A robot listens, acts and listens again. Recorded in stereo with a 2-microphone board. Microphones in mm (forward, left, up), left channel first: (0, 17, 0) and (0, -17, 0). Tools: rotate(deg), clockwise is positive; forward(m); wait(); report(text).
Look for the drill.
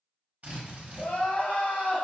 rotate(60)
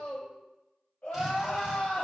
wait()
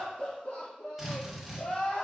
rotate(10)
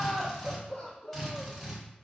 report("Facing the drill.")